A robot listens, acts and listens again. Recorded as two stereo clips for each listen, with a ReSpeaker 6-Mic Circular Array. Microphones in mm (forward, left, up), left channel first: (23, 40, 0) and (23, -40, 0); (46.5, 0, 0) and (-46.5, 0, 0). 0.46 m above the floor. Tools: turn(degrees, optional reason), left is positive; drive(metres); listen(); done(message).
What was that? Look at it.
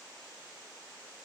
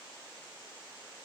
listen()
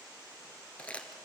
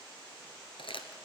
turn(degrees=15, reason="The crumpling: 15° left.")
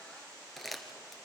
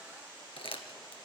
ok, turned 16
done("Facing the crumpling, 1 to 2 m away.")